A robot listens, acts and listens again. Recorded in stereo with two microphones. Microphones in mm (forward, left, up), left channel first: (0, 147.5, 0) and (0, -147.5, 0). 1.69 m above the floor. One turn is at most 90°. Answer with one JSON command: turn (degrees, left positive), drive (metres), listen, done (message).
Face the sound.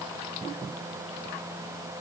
{"listen": true}
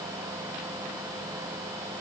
{"listen": true}
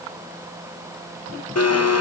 {"turn": 55}
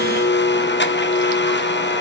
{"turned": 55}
{"turn": 45}
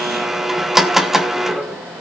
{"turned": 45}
{"done": "Found it: a blender, straight ahead, 1 to 2 m away."}